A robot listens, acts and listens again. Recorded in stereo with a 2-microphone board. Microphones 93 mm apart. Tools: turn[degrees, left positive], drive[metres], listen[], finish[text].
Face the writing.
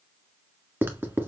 Thought: The writing: about 25° right or 155° right.
Action: turn[-25]
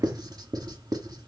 Thought: So it is at 130° right.
Action: turn[-130]
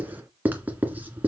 Thought: The writing is now 20° right.
Action: turn[-20]
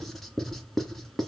Action: finish[Facing the writing, 1 to 2 m away.]